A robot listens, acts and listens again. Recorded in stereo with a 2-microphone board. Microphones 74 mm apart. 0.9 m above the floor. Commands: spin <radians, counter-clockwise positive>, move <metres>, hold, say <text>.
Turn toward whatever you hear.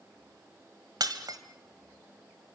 spin -1.05
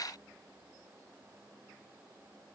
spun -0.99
hold
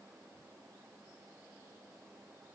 say I heard breaking glass, but can't make it out now. It was about 5° right or 65° right.